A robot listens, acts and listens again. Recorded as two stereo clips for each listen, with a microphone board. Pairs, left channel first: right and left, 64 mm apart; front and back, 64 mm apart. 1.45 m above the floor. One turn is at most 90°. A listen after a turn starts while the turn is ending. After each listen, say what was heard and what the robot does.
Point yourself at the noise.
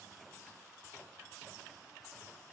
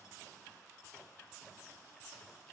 Keep listening.
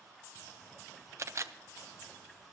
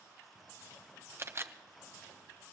The camera shutter: 130° left. Turn 90° left.
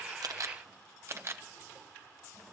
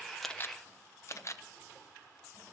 The camera shutter is now 40° left. Turn 40° left.
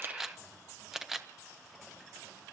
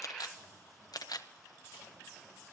Found it: a camera shutter, straight ahead.